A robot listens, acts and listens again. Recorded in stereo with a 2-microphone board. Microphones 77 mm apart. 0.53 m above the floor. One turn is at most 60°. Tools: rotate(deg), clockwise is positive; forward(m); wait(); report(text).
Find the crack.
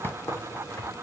rotate(-35)
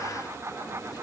wait()
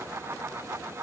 report("I heard a crack, but can't make it out now. It was about straight ahead or 110° left.")